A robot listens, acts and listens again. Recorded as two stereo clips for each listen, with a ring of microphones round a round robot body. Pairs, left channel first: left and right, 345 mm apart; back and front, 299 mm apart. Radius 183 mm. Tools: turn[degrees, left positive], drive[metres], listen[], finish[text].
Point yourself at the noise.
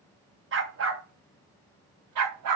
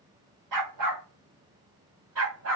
Thought: The dog barking: 55° right.
Action: turn[-55]
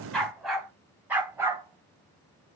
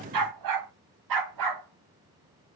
Action: finish[Facing the dog barking.]